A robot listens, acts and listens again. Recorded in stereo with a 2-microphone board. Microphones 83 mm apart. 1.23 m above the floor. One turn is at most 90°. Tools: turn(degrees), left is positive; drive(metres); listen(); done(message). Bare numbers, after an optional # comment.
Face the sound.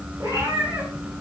# The cat meowing: about 45° right or 135° right.
turn(-45)
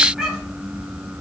done("Facing the cat meowing, over 4 m away.")